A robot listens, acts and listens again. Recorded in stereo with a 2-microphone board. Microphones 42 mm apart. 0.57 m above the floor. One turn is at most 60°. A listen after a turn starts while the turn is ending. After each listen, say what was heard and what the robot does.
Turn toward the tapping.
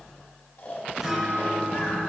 Keep listening.
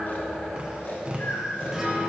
The tapping: about 30° right or 150° right. Turn 30° right.
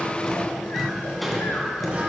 Found it: tapping, straight ahead.